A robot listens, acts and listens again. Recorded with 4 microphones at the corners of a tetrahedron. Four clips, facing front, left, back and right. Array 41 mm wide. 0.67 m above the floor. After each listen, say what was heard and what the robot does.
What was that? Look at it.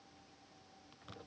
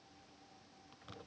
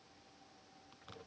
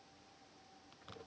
Keep listening.
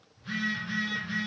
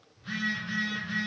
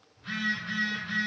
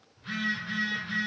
The phone buzzing: 155° right. Turn 155° right.
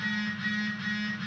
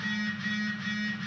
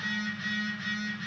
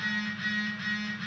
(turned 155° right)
The phone buzzing is now 65° right. Turn 65° right.
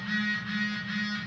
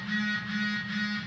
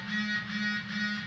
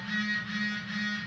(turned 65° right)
Facing the phone buzzing, 1 to 2 m away.